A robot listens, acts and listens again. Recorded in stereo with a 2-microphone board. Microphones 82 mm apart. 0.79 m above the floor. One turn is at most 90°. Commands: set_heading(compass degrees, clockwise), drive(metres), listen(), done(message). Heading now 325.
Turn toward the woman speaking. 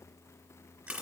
listen()
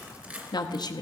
set_heading(270)
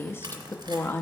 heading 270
set_heading(235)
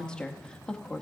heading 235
set_heading(225)
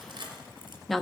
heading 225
done("Facing the woman speaking.")